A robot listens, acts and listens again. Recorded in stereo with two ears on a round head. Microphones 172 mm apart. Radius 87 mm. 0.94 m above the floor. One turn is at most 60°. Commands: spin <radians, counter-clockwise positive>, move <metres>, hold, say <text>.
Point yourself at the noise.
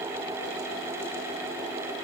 hold
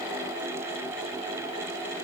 hold
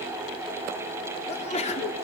spin 0.61
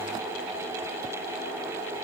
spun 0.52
hold
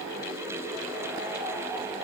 say I heard a sneeze, but can't make it out now. It was about 5° left or 115° left.